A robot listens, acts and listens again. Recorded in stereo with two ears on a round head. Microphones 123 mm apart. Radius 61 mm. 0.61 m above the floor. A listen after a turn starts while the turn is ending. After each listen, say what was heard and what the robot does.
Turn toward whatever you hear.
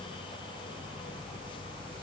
Keep listening.
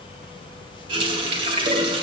The running tap: about 40° right or 140° right. Turn 40° right.
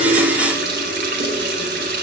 So it is at 100° right. Turn 100° right.
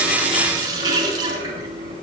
The running tap is now 25° right. Turn 25° right.
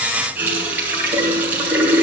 The running tap is now 10° right. Turn 10° right.
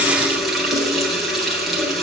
Facing the running tap, 2 to 4 m away.